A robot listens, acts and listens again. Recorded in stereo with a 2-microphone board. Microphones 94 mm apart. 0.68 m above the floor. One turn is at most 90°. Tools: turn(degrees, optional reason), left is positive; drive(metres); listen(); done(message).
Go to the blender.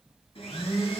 turn(degrees=90)
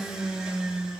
drive(metres=1.0)
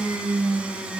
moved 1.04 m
turn(degrees=-10, reason="The blender is now 10° right.")
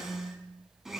drive(metres=1.0)
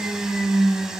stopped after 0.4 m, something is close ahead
done("I am next to the blender.")